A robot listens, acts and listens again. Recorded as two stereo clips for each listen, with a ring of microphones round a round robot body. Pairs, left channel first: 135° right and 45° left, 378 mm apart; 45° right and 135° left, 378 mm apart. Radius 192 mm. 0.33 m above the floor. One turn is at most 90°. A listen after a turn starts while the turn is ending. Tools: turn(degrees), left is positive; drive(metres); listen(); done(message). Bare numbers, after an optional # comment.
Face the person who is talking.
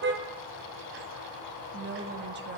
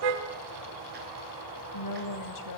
# The woman speaking: 15° right.
turn(-15)
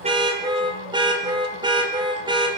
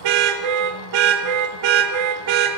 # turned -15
listen()
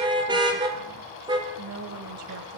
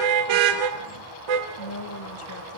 done("Found it: a woman speaking, straight ahead.")